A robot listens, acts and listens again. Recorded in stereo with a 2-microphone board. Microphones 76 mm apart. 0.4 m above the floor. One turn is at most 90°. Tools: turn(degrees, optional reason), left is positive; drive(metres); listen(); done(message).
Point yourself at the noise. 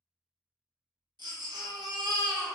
turn(degrees=-90)
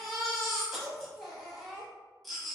done("Found it: a baby crying, straight ahead.")